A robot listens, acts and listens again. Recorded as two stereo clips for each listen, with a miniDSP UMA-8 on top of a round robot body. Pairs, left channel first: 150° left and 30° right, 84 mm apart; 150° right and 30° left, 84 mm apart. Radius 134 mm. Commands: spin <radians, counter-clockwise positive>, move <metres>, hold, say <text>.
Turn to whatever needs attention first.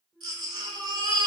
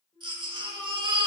say Found it: a baby crying, straight ahead.